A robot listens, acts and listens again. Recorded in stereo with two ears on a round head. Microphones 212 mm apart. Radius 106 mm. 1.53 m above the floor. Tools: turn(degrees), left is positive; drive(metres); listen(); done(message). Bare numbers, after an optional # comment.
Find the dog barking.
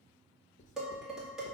listen()
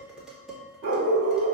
# The dog barking: about 45° right or 135° right.
turn(-45)
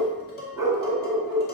# So it is at 15° right.
turn(-15)
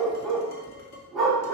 done("Facing the dog barking, 1 to 2 m away.")